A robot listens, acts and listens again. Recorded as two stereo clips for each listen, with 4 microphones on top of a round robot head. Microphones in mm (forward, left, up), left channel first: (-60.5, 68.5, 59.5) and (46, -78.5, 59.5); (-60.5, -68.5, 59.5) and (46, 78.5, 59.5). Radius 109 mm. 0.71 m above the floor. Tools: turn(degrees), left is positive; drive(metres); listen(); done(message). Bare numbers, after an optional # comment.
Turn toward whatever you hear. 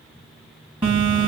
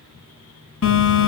# The phone buzzing: 115° right.
turn(-115)
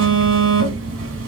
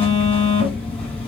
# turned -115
# The phone buzzing is now 45° right.
turn(-45)
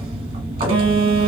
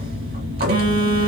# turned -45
# The phone buzzing is now 10° left.
turn(10)
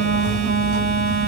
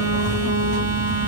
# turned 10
done("Facing the phone buzzing.")